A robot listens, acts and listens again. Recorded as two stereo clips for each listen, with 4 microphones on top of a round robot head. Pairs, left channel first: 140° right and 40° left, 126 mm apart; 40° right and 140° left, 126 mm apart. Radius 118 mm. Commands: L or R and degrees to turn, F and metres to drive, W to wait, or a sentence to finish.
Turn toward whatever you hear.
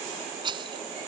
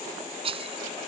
L95
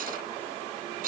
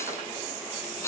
L30
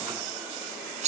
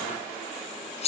Facing the rattle.